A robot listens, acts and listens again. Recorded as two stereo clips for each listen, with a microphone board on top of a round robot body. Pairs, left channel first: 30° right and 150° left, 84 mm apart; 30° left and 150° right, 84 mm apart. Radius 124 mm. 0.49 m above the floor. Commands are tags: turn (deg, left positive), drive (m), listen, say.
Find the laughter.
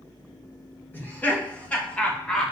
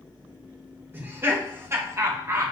<turn deg="-110"/>
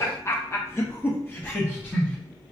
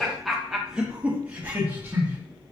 <turn deg="-95"/>
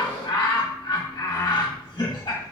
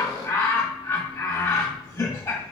<turn deg="-15"/>
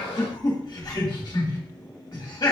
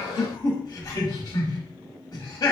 <say>Found it: laughter, straight ahead.</say>